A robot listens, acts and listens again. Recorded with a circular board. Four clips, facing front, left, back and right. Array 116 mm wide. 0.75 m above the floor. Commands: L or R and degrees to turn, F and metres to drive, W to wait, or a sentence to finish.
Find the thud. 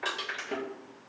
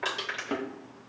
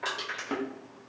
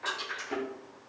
L135
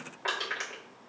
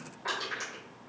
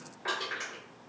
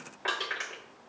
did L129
Facing where the thud came from. I can't hear it now.